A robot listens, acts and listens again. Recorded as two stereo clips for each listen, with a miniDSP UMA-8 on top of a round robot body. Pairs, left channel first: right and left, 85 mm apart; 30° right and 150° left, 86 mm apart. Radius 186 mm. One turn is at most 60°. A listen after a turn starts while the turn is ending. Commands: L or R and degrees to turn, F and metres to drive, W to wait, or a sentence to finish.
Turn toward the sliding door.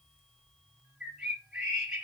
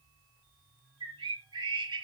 W
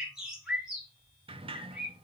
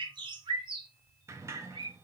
L60
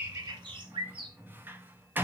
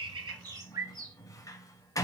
L20
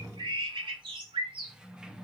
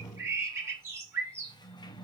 L10
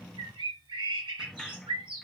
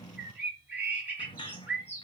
Facing the sliding door, under 1 m away.